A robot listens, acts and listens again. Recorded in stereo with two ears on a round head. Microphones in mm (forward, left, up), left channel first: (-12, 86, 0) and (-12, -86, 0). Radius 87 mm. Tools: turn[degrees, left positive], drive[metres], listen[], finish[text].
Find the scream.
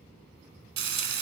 Action: listen[]
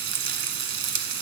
Action: listen[]
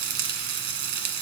Action: finish[I can't make out a scream, only frying.]